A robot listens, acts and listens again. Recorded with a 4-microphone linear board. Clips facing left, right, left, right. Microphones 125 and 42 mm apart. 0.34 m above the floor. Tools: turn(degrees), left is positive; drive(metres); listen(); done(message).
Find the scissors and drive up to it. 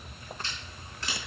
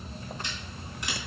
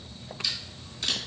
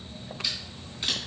turn(degrees=-15)
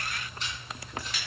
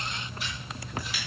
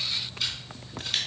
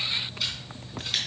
drive(metres=1.0)
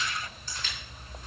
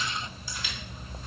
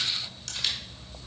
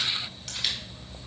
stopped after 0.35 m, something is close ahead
turn(degrees=-10)
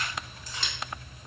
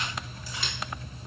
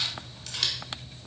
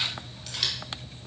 done("Something is in my way. I am facing the scissors but have not reached it.")